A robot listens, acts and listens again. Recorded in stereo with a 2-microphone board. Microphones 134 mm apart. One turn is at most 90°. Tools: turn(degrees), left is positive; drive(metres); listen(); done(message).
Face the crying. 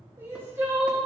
turn(degrees=-20)
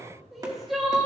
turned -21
done("Facing the crying.")